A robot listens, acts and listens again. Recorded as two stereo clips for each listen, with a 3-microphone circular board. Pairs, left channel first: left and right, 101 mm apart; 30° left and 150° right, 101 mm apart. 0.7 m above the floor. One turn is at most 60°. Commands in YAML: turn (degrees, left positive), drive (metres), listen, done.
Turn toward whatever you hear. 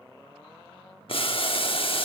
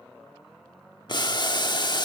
turn: 60
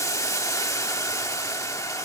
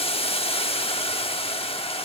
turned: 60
turn: 35
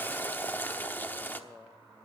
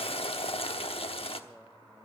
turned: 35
turn: 20
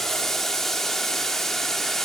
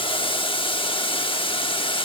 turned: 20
done: "Facing the boiling, 1 to 2 m away."